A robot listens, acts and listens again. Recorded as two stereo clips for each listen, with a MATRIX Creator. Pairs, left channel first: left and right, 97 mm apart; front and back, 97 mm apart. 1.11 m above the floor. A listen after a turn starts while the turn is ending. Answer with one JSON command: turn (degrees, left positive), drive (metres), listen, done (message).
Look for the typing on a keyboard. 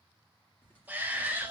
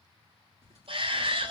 {"turn": 165}
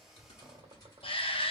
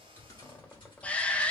{"turn": 40}
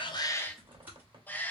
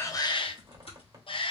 {"turn": -15}
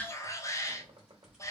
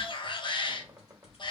{"done": "Facing the typing on a keyboard."}